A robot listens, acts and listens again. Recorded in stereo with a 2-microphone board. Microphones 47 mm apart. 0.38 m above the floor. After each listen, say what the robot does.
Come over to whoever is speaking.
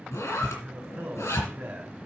Turn 50° right.
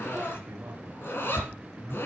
Turn 75° right.
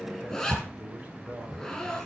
Turn 35° right.
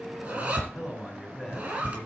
Drive 1.0 m forward.
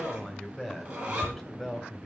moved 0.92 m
Drive 1.0 m forward.
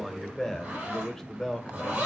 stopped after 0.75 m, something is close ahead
Turn 10° left.
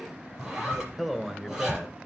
Arrived at the man speaking, straight ahead.